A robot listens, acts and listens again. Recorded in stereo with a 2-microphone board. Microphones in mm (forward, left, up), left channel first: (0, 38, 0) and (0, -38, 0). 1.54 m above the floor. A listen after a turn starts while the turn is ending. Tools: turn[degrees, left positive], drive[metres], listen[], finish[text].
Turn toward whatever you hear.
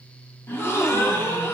Thought: The gasp: about 35° left or 145° left.
Action: turn[35]
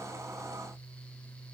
Action: listen[]
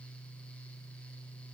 Action: finish[I heard a gasp, but can't make it out now. It was about straight ahead or 110° left.]